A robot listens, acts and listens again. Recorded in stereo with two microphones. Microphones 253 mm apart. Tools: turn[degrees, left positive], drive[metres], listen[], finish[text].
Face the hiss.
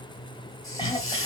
Thought: The hiss: about 55° left or 125° left.
Action: turn[55]
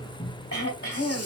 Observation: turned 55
Action: listen[]
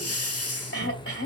Thought: So it is at 70° left.
Action: turn[70]
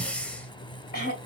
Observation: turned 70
Action: finish[Facing the hiss, under 1 m away.]